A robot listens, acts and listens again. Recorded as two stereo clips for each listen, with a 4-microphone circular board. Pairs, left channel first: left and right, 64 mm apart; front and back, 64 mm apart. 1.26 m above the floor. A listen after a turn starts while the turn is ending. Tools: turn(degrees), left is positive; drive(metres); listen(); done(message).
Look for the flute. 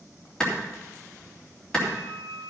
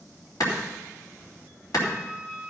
turn(degrees=55)
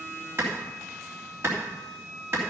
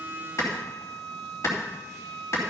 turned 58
done("Facing the flute, 2 to 4 m away.")